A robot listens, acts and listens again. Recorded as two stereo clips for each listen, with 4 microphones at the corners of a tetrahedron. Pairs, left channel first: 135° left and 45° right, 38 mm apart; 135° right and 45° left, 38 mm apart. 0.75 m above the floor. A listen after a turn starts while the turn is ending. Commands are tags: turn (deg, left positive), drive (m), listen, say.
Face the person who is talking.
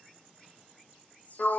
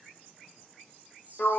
<listen/>
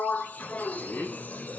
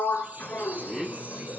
<turn deg="135"/>
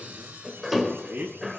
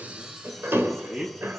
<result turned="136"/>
<say>Found it: a man speaking, straight ahead.</say>